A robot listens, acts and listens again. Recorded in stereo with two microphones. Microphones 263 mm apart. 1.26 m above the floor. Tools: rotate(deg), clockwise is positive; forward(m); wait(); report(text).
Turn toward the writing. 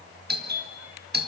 wait()
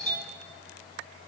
wait()
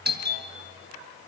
report("I can't make out writing, only a doorbell.")